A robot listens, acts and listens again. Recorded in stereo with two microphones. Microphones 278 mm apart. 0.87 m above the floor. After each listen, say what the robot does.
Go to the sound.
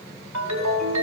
Turn 90° right.
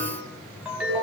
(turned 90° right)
Drive 1.0 m forward.
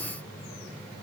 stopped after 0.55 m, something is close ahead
Keep listening.
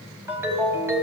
Turn 10° right.
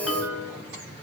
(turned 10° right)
Something is in my way. I am facing the ringtone but have not reached it.